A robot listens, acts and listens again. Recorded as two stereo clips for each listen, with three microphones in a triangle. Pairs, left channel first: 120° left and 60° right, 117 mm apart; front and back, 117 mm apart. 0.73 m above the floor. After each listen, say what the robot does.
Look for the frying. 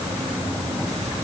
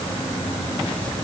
Keep listening.
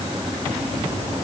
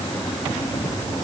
Keep listening.
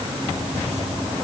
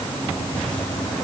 I can't make out frying.